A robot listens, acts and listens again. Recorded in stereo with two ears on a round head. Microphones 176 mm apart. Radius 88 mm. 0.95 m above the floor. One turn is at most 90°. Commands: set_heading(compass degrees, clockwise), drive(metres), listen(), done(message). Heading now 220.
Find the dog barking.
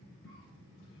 listen()
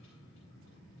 listen()
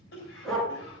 set_heading(190)
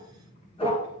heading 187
set_heading(97)
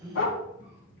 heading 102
set_heading(32)
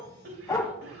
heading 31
set_heading(16)
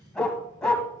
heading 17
done("Facing the dog barking.")